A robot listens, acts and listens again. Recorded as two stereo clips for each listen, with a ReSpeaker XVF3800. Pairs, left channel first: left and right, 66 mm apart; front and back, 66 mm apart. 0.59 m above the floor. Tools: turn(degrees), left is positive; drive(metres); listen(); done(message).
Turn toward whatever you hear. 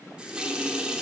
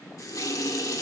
turn(degrees=-15)
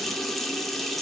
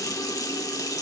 done("Facing the running tap, 1 to 2 m away.")